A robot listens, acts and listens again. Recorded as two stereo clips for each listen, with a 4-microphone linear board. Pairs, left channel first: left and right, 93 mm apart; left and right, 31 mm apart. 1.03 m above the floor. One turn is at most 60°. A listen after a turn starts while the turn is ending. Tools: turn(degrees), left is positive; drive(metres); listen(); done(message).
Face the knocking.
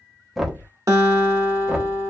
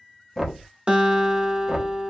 turn(degrees=30)
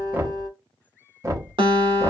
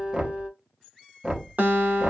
turn(degrees=-35)
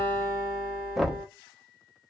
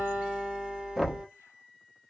done("Found it: knocking, straight ahead.")